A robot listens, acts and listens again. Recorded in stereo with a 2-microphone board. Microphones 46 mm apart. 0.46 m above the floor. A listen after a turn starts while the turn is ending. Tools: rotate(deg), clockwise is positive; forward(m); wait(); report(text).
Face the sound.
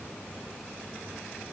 wait()
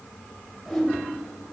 rotate(-30)
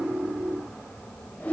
rotate(-140)
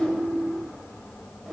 rotate(15)
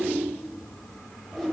report("Facing the whoosh, 1 to 2 m away.")